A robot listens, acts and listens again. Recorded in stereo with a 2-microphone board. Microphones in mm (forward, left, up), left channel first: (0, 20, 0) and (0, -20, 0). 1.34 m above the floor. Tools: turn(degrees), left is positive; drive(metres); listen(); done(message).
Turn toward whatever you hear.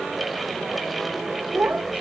turn(degrees=-50)
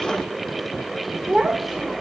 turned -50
done("Found it: a child speaking, straight ahead, 2 to 4 m away.")